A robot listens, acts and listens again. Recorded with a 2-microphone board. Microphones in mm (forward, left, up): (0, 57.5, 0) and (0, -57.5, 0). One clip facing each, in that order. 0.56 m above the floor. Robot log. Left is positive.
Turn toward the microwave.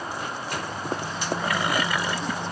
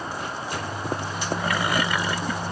note: The microwave: about 20° right or 160° right.
cmd yaw -20
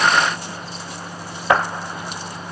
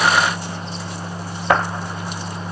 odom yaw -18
note: So it is at 140° right.
cmd yaw -140
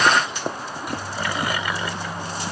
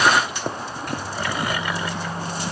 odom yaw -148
note: The microwave is now 10° left.
cmd yaw +10
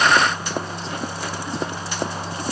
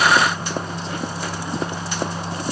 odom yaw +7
end: Facing the microwave, over 4 m away.